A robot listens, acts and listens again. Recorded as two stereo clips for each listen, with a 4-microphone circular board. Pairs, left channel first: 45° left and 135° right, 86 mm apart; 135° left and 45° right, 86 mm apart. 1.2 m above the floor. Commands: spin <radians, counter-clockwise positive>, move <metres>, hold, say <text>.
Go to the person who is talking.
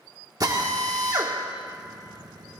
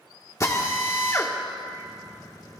hold
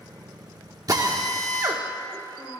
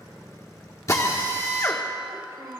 spin 0.17
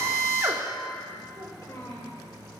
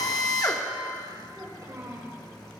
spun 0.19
move 1.0
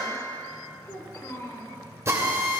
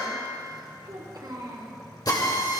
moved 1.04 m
move 1.0
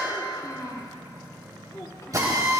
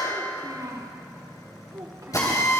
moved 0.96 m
move 1.0
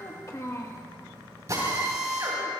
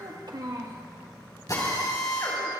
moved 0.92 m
move 1.0
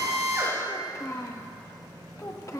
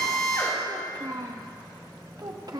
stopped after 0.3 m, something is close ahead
say I am next to the child speaking.